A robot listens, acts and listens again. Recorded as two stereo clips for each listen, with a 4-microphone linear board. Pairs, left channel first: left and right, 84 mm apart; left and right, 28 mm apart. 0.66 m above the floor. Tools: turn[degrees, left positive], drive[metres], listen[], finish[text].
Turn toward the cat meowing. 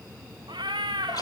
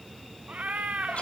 Action: turn[-90]
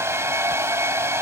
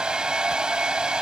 Action: listen[]
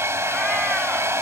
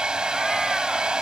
Action: listen[]
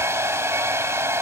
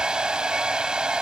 Action: finish[Facing where the cat meowing came from. I can't hear it now.]